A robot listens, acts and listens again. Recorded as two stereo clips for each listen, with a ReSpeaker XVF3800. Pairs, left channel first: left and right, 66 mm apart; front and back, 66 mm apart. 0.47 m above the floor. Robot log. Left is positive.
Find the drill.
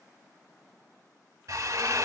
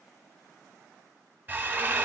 note: The drill: 120° right.
cmd yaw -120
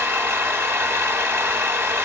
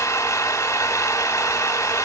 note: The drill is now 40° right.
cmd yaw -40
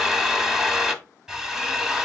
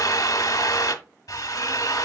end: Facing the drill.